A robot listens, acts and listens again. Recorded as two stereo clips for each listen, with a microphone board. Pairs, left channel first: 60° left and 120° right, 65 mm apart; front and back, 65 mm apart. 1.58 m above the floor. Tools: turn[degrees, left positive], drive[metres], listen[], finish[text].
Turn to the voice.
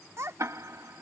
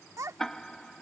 Thought: The child speaking: 155° right.
Action: turn[-155]
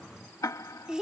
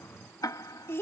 Thought: The child speaking is now 45° right.
Action: turn[-45]
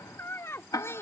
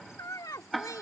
Thought: The child speaking is now 15° left.
Action: turn[15]
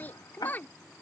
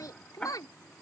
Action: finish[Facing the child speaking.]